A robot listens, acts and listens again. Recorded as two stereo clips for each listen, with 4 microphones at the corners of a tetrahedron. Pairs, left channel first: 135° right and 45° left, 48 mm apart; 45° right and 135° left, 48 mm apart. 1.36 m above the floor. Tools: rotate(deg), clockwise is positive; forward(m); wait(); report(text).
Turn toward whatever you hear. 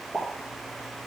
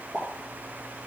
rotate(-95)
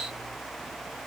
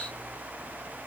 report("Facing where the pop came from. I can't hear it now.")